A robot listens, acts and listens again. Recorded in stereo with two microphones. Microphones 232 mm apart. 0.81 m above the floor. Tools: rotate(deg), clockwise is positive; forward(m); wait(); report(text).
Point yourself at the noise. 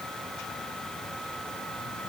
wait()
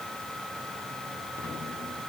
wait()
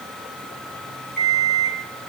rotate(-45)
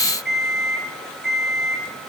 report("Facing the alarm clock, over 4 m away.")